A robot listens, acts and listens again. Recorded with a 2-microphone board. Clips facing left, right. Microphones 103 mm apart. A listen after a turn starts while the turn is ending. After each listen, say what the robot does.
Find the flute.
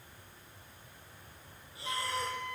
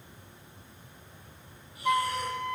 Turn 60° right.
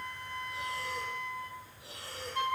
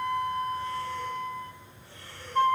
Turn 45° right.
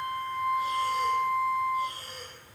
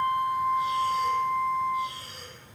Found it: a flute, straight ahead, 1 to 2 m away.